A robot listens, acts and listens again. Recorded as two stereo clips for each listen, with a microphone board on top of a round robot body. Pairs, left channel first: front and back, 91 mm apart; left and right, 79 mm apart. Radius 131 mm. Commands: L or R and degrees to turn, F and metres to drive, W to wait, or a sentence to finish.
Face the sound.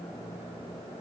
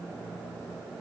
W
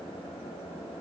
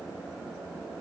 W
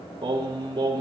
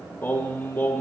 L150
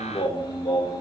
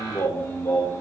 L30
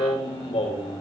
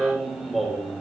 Facing the singing.